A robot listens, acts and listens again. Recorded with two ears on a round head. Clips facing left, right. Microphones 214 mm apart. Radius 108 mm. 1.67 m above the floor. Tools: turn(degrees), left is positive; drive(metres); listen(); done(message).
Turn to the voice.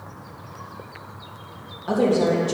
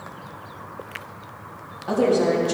turn(degrees=20)
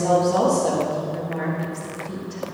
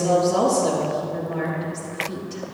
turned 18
done("Facing the woman speaking.")